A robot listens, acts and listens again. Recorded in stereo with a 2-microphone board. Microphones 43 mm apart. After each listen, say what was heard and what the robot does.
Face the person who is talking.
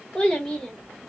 Turn 30° left.
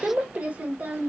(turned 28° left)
So it is at 40° right. Turn 40° right.
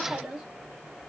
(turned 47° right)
The child speaking is now 15° right. Turn 15° right.
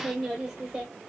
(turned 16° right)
The child speaking is now 10° right. Turn 10° right.
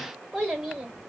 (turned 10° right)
The child speaking is now 10° right. Turn 10° right.
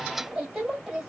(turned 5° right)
Found it: a child speaking, straight ahead, 2 to 4 m away.